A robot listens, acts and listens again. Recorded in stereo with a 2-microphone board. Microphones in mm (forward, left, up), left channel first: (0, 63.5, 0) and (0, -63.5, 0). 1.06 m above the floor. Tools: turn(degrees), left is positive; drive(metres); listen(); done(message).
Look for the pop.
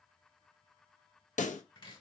turn(degrees=90)
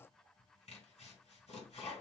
done("I heard a pop from this way, but can't make it out now.")